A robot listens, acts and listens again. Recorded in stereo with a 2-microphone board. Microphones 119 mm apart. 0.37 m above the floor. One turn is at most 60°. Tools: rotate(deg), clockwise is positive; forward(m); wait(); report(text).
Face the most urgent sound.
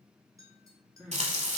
rotate(30)
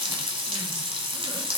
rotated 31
wait()
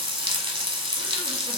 wait()
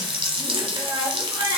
rotate(60)
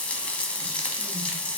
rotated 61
rotate(60)
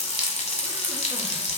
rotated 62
rotate(15)
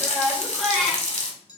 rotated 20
report("Found it: crying, straight ahead.")